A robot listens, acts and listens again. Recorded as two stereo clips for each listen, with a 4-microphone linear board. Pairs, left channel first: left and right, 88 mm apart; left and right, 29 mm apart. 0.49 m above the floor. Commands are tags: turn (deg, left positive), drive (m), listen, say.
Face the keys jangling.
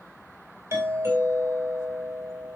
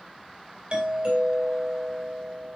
<listen/>
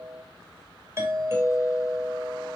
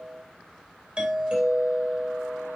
<listen/>
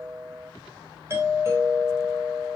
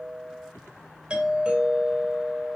<say>I can't make out keys jangling to turn to.</say>